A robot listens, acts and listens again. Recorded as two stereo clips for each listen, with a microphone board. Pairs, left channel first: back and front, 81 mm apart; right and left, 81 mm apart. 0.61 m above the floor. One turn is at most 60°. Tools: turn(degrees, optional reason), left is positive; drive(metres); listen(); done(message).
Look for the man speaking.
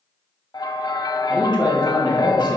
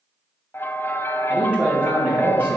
turn(degrees=60, reason="The man speaking: 160° left.")
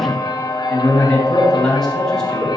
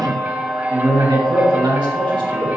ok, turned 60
turn(degrees=60, reason="The man speaking is now 95° left.")
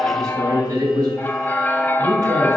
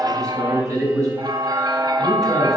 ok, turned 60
turn(degrees=40, reason="The man speaking is now 40° left.")
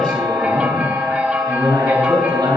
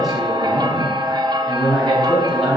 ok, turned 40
done("Found it: a man speaking, straight ahead.")